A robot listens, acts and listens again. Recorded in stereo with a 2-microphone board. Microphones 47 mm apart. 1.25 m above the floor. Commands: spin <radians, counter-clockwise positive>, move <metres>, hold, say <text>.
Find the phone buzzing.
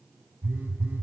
spin -0.79
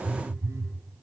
spin -1.57
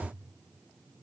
hold
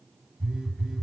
say Facing the phone buzzing.